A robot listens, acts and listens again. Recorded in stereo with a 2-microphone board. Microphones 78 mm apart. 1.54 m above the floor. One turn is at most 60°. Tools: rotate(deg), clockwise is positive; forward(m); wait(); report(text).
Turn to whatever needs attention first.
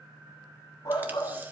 rotate(-50)
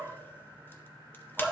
report("Found it: a shout, straight ahead.")